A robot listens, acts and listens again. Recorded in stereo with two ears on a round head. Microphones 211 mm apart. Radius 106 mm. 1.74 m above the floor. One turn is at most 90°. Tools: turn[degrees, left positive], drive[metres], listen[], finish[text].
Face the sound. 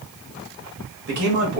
Thought: The man speaking: about 50° right or 130° right.
Action: turn[-50]
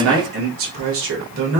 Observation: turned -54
Thought: So it is at 50° right.
Action: turn[-50]
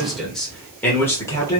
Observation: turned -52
Thought: The man speaking is now 15° left.
Action: turn[15]
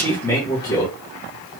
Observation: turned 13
Thought: The man speaking is now 15° left.
Action: turn[15]
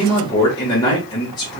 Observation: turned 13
Thought: The man speaking is now 15° left.
Action: turn[15]
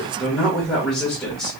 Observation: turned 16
Action: finish[Facing the man speaking, 1 to 2 m away.]